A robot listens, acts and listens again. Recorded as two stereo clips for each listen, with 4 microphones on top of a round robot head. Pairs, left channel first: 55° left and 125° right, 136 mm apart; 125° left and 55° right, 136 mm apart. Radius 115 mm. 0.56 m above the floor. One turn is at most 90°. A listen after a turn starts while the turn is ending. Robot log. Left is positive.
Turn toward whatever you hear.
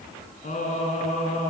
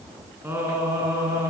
note: The singing: 20° left.
cmd yaw +20
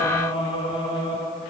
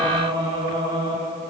end: Facing the singing, over 4 m away.